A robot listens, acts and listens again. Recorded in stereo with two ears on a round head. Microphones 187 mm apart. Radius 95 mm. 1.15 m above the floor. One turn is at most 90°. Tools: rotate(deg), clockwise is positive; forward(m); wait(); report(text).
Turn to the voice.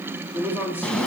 rotate(30)
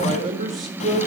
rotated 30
rotate(90)
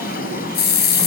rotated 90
rotate(50)
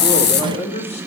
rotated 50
rotate(-30)
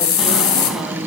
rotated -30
wait()
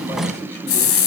wait()
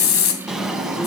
report("I heard a man speaking from this way, but can't make it out now.")